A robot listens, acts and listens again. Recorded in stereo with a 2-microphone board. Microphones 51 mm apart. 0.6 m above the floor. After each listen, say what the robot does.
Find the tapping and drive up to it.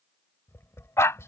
Turn 60° left.
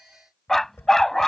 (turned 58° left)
Turn 60° left.
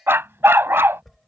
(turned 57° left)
Drive 1.0 m forward.
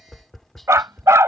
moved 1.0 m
Drive 1.0 m forward.
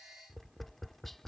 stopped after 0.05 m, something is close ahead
Arrived at the tapping, straight ahead.